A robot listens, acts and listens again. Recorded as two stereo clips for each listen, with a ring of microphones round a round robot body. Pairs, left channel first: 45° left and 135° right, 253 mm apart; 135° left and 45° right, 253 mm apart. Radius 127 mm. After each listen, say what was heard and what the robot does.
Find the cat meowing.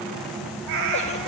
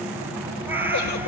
The cat meowing: 125° right. Turn 125° right.
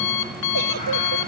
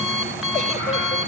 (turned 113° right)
Nothing new. It was at 15° right. Turn 15° right.
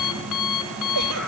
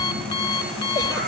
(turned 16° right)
Keep listening.
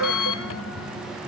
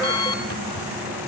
I heard a cat meowing from this way, but can't make it out now.